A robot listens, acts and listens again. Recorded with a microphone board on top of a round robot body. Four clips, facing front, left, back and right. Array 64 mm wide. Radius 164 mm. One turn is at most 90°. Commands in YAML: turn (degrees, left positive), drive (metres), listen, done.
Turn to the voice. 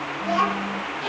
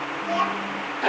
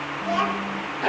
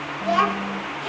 turn: -90
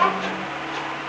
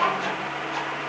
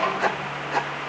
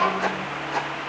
done: "Facing the child speaking."